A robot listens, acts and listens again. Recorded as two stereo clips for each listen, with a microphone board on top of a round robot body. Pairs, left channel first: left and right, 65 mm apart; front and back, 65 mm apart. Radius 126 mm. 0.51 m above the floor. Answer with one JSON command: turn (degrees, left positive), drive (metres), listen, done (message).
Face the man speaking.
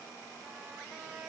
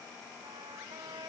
{"listen": true}
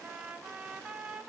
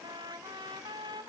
{"listen": true}
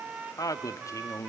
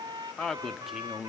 {"turn": 110}
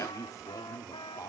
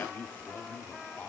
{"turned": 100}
{"turn": 75}
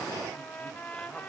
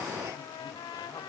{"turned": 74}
{"listen": true}
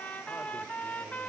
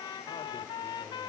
{"listen": true}
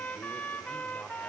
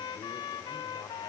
{"done": "Facing where the man speaking came from. I can't hear it now."}